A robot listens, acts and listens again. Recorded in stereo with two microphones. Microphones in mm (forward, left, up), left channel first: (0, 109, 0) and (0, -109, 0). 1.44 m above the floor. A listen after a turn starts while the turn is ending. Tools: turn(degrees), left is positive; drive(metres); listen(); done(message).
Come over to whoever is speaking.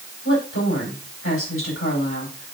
turn(degrees=70)
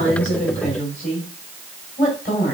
turn(degrees=40)
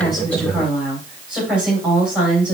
drive(metres=1.0)
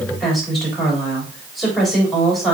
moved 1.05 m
drive(metres=1.0)
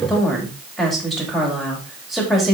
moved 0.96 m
drive(metres=1.0)
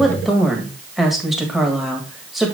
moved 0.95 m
drive(metres=1.0)
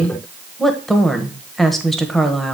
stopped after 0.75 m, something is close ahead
done("I am next to the woman speaking.")